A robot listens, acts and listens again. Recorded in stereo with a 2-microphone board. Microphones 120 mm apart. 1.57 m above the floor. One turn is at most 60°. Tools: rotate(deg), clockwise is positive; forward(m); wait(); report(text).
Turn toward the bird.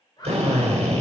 rotate(-35)
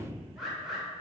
report("Found it: a bird, straight ahead, 2 to 4 m away.")